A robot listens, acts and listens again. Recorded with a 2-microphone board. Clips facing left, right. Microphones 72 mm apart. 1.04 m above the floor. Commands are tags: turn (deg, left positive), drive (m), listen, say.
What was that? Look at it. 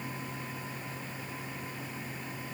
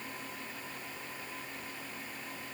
<listen/>
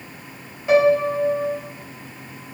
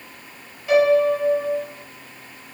<turn deg="20"/>
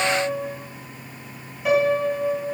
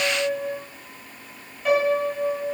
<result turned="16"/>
<say>Facing the piano, over 4 m away.</say>